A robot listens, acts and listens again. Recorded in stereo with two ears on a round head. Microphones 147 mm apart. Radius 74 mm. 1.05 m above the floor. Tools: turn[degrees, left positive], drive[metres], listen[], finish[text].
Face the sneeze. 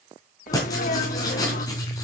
Thought: The sneeze: about 55° left or 125° left.
Action: turn[55]
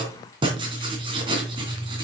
Action: listen[]
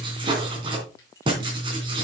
Action: finish[I heard a sneeze, but can't make it out now. It was about straight ahead or 70° left.]